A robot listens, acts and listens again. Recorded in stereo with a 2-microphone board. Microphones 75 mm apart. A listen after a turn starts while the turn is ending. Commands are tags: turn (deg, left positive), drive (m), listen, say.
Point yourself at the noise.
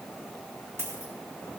<turn deg="-35"/>
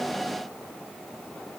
<listen/>
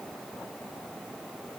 <say>I heard a dropped coin, but can't make it out now. It was about straight ahead or 110° right.</say>